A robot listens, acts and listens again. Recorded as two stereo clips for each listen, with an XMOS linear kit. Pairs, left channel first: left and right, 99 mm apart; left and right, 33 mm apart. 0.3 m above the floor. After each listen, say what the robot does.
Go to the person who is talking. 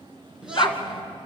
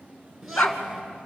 Turn 30° right.
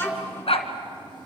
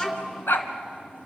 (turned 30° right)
Turn 20° left.
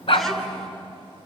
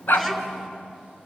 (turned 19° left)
Drive 1.0 m forward.
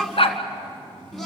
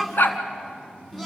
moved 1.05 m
Drive 1.0 m forward.
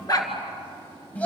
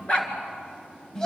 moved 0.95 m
Turn 20° left.
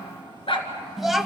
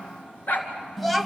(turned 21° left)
Drive 1.0 m forward.
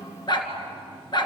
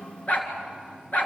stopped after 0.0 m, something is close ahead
Keep listening.
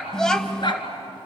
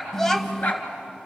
Turn 10° left.
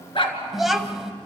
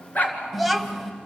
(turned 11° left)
Arrived at the child speaking, straight ahead.